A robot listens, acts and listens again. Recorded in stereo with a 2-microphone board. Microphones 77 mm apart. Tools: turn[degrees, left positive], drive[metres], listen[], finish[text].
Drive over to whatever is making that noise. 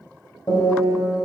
Thought: The piano: about 50° left or 130° left.
Action: turn[50]
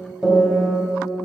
Thought: So it is at 10° left.
Action: turn[10]
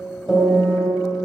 Action: drive[1.0]
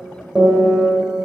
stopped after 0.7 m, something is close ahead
Action: finish[I am next to the piano.]